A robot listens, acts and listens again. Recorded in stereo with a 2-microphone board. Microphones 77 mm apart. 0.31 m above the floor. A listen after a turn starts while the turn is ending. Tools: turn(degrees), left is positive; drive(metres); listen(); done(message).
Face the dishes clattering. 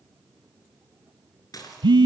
turn(degrees=55)
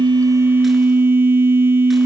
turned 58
listen()
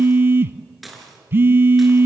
done("Facing the dishes clattering, 2 to 4 m away.")